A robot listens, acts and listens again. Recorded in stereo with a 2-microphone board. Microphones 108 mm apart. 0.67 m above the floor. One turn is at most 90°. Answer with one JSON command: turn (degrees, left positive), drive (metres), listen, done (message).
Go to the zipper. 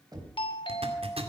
{"turn": -65}
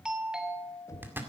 {"turn": -25}
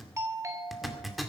{"drive": 1.0}
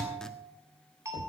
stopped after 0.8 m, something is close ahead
{"done": "I am next to the zipper."}